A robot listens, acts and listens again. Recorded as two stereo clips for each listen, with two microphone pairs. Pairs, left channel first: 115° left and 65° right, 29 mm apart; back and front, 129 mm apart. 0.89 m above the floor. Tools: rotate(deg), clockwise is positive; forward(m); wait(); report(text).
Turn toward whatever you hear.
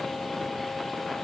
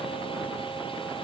wait()
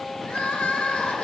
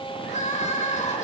rotate(-165)
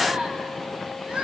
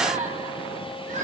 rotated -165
rotate(10)
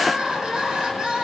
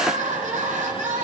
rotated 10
report("Facing the crying.")